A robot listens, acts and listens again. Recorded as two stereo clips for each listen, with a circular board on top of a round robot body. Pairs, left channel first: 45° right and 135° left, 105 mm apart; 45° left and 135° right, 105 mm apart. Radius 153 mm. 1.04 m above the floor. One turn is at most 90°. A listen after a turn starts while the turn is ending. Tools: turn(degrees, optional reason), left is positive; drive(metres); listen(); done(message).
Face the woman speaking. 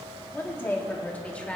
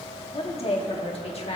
turn(degrees=35, reason="The woman speaking: 35° left.")
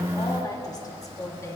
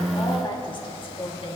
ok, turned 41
turn(degrees=20, reason="The woman speaking is now 20° left.")
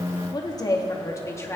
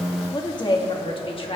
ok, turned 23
turn(degrees=20, reason="The woman speaking is now 20° left.")
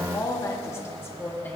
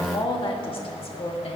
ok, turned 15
turn(degrees=25, reason="The woman speaking is now 25° left.")
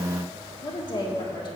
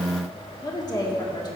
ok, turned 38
done("Found it: a woman speaking, straight ahead.")